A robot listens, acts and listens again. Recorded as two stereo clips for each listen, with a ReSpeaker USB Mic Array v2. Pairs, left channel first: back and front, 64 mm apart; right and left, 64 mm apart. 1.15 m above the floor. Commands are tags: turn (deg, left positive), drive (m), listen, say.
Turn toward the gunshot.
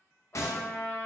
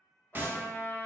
<turn deg="145"/>
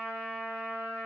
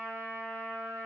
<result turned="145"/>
<say>Facing where the gunshot came from. I can't hear it now.</say>